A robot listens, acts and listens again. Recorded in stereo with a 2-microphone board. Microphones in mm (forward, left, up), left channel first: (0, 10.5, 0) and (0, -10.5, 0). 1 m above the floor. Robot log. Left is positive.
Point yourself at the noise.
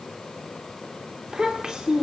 note: The child speaking: about 35° right or 145° right.
cmd yaw -35
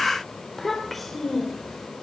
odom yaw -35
end: Found it: a child speaking, straight ahead, 2 to 4 m away.